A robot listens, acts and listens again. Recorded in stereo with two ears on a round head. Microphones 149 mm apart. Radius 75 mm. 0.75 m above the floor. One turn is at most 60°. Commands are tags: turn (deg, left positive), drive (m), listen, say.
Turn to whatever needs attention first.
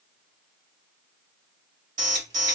<turn deg="-45"/>
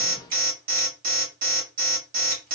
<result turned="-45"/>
<turn deg="-60"/>
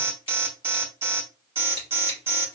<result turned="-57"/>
<turn deg="-20"/>
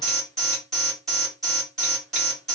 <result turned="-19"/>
<say>Facing the alarm.</say>